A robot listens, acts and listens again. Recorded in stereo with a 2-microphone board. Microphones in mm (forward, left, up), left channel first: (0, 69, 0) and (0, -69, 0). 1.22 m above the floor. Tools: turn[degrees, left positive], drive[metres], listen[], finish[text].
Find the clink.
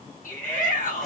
Action: listen[]
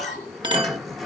Thought: The clink: about 35° right or 145° right.
Action: turn[-35]
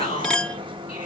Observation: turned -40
Action: finish[Facing the clink.]